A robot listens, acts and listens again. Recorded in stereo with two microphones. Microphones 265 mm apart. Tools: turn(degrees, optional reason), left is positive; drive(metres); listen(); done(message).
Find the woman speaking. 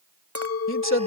turn(degrees=50, reason="The woman speaking: about 50° left or 130° left.")
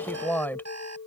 turn(degrees=10, reason="So it is at 10° left.")
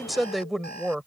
done("Facing the woman speaking.")